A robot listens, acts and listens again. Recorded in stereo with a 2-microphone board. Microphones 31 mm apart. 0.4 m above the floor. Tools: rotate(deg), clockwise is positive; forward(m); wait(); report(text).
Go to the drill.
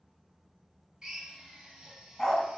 rotate(15)
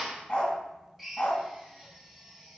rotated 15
forward(1.0)
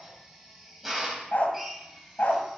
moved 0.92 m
forward(1.0)
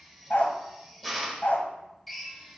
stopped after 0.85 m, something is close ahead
report("I am next to the drill.")